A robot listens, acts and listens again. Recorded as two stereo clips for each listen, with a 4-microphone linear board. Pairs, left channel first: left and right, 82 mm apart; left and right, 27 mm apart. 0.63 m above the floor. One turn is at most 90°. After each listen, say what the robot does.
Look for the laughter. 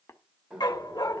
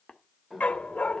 Turn 30° right.
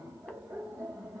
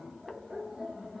Turn 90° right.
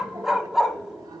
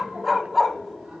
Turn 50° right.
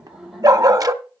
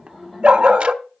Facing the laughter, 2 to 4 m away.